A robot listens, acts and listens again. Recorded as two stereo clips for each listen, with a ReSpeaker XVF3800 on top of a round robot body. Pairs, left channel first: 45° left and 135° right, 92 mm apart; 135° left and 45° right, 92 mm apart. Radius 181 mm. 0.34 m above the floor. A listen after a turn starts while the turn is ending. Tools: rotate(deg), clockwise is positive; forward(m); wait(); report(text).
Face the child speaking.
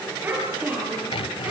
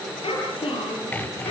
rotate(-155)
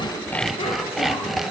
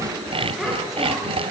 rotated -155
wait()
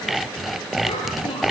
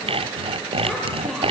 wait()
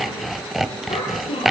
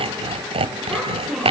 rotate(-45)
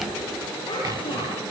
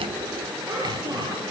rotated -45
report("Facing the child speaking.")